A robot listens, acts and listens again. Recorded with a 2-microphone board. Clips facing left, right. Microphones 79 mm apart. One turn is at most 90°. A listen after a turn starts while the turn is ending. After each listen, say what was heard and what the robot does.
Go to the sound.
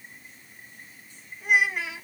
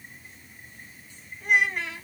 Turn 30° left.
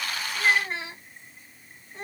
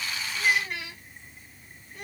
So it is at 145° left. Turn 90° left.
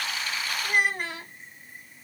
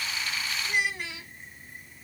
The child speaking is now 50° left. Turn 50° left.
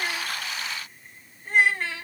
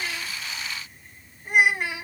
The child speaking is now 15° right. Turn 15° right.
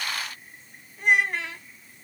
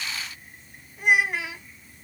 Drive 1.0 m forward.
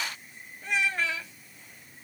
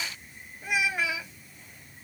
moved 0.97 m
The child speaking is now 10° right. Turn 10° right.
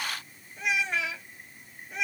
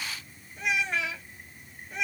Drive 1.0 m forward.
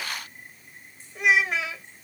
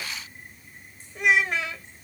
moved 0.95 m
Drive 1.0 m forward.
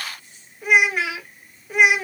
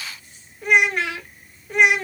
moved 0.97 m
Drive 1.0 m forward.
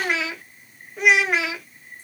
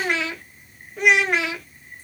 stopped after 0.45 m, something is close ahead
Arrived at the child speaking, straight ahead.